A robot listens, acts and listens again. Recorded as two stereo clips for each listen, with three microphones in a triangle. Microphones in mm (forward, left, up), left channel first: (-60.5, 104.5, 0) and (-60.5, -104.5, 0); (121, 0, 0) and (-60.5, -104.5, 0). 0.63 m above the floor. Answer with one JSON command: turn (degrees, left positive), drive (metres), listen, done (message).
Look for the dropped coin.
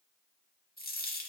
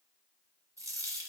{"turn": 135}
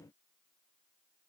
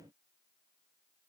{"done": "I heard a dropped coin from this way, but can't make it out now."}